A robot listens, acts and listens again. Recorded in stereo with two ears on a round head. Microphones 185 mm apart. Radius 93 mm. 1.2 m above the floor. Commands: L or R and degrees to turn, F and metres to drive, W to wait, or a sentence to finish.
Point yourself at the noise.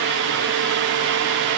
W
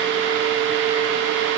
W
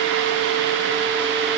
I can't make out anything.